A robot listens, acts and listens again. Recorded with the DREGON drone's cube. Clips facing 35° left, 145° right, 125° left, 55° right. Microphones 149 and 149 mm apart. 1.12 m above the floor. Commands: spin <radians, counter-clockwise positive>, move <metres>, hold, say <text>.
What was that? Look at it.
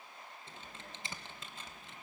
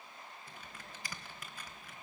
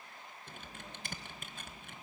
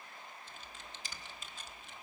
spin 1.66
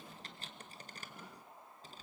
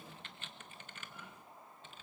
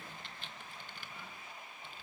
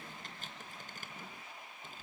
spin -0.26
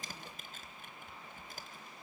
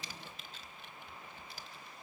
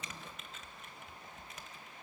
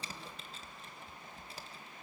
say Found it: typing on a keyboard, straight ahead.